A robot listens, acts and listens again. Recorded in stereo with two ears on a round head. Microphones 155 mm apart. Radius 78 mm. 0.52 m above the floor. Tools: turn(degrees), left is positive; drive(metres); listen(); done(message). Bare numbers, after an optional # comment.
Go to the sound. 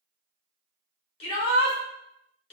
# The shout: about 35° left or 145° left.
turn(35)
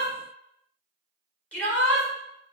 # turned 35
# So it is at 10° left.
turn(10)
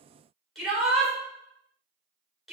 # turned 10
drive(1.0)
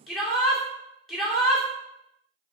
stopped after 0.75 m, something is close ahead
done("Arrived at the shout, straight ahead.")